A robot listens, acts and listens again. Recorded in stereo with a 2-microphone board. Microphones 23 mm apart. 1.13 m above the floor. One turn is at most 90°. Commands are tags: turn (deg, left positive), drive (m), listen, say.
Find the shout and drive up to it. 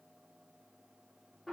<listen/>
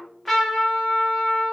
<listen/>
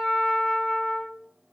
<say>I can't make out a shout, only a trumpet.</say>